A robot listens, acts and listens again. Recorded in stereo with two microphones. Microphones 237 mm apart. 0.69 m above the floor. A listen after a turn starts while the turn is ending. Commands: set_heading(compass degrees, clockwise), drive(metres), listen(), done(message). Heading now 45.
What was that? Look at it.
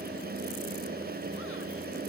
listen()
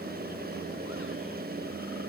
listen()
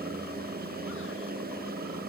done("I can't make out anything to turn to.")